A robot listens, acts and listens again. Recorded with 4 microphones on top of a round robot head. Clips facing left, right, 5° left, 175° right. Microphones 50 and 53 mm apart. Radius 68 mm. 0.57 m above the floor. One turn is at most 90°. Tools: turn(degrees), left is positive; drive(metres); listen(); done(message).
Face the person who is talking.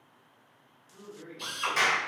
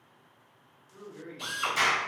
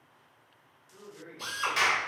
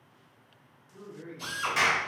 turn(degrees=-60)
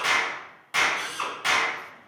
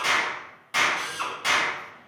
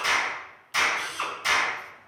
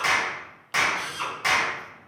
listen()
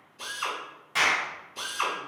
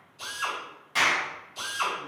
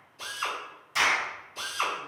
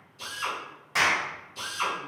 listen()
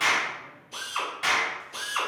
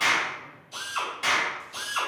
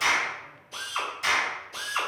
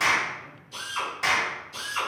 done("I heard a man speaking from this way, but can't make it out now.")